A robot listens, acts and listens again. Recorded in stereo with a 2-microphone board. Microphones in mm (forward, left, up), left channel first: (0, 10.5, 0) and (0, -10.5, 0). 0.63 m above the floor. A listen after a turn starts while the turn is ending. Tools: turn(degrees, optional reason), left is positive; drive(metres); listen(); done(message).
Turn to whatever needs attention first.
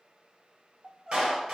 turn(degrees=-25, reason="The crying: about 25° right or 155° right.")
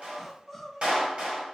done("Facing the crying, under 1 m away.")